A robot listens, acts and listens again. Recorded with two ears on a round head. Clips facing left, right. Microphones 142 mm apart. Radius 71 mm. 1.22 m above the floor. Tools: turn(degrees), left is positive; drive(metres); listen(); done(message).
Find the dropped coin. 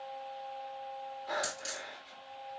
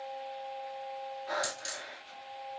turn(degrees=30)
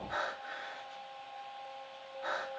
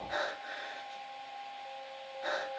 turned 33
listen()
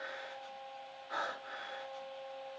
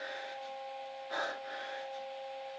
done("I heard a dropped coin, but can't make it out now. It was about 30° right or 145° left.")